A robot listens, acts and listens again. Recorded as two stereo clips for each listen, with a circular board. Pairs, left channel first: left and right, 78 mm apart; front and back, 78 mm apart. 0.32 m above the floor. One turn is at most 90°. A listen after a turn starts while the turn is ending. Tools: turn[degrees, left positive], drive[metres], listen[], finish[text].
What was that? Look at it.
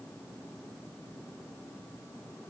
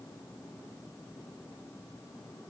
Action: listen[]
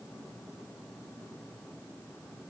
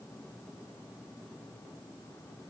Action: listen[]
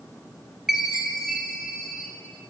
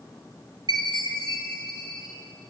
Thought: The chime: 175° right.
Action: turn[-90]
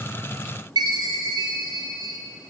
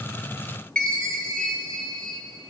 Thought: The chime is now 80° right.
Action: turn[-80]
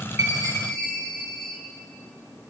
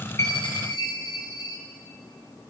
Thought: The chime is now 10° left.
Action: turn[10]
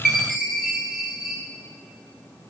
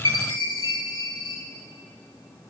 Action: finish[Found it: a chime, straight ahead.]